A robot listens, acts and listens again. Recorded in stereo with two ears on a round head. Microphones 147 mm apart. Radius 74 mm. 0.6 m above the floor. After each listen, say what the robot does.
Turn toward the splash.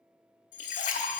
Turn 50° left.
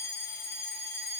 Keep listening.
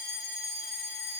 I heard a splash, but can't make it out now. It was about straight ahead or 80° left.